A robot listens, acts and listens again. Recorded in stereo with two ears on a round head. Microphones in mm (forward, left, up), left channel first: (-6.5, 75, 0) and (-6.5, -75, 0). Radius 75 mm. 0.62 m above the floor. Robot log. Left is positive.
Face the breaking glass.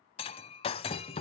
note: The breaking glass: about 35° left or 145° left.
cmd yaw +35
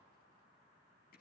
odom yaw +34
cmd idle
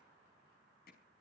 end: I heard breaking glass, but can't make it out now. It was about straight ahead or 110° left.